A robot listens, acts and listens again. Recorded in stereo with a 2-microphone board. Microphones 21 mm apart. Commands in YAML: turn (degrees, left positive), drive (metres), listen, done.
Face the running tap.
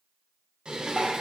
listen: true
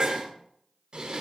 listen: true
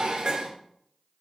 done: "I can't make out a running tap to turn to."